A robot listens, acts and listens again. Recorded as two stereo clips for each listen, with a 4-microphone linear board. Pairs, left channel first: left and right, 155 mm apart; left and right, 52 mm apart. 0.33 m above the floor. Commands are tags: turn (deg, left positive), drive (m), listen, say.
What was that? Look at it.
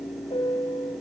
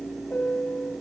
<turn deg="40"/>
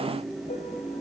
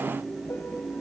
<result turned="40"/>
<listen/>
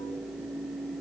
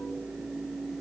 <listen/>
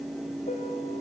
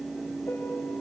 <say>I heard a piano, but can't make it out now. It was about straight ahead or 100° left.</say>